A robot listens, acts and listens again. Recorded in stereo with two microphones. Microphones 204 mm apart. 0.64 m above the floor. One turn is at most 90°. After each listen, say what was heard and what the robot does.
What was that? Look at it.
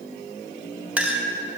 Turn 30° right.
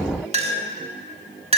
So it is at 145° right. Turn 90° right.
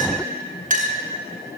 The clink is now 45° right. Turn 45° right.
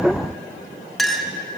Found it: a clink, straight ahead.